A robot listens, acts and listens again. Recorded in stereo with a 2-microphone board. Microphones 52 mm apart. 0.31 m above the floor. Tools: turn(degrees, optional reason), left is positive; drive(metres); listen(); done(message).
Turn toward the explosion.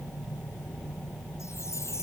listen()
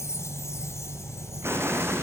turn(degrees=-50, reason="The explosion: about 50° right or 130° right.")
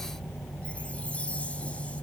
listen()
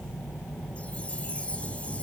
done("I heard an explosion, but can't make it out now. It was about straight ahead or 80° right.")